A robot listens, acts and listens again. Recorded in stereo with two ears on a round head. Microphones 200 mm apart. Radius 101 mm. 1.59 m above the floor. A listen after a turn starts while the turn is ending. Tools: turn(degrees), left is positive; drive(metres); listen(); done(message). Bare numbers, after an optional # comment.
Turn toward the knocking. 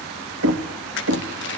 # The knocking: about 70° right or 110° right.
turn(-70)
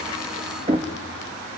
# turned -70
# So it is at 25° right.
turn(-25)
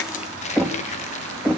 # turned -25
done("Facing the knocking, 1 to 2 m away.")